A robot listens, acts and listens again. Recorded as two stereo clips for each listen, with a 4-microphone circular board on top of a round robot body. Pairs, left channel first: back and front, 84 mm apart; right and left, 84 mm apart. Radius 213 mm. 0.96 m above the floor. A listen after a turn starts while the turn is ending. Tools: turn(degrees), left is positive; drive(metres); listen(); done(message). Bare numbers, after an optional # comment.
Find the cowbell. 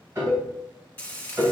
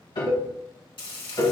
# The cowbell: 100° left.
turn(100)
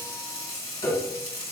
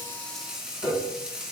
# The cowbell is now 20° left.
turn(20)
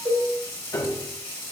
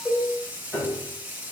done("Facing the cowbell.")